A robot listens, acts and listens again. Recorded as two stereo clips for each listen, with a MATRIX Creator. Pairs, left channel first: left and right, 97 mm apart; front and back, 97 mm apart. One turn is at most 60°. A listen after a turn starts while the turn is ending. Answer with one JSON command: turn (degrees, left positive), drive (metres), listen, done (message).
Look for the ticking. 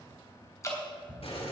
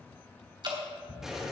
{"turn": 20}
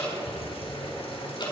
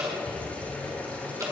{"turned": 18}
{"listen": true}
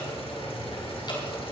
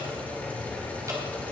{"listen": true}
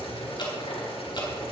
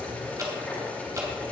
{"done": "Facing where the ticking came from. I can't hear it now."}